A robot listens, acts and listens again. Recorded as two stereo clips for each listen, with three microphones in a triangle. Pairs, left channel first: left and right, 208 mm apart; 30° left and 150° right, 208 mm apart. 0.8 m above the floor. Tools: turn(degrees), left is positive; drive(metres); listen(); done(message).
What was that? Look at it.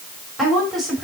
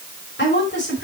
done("Found it: a woman speaking, straight ahead.")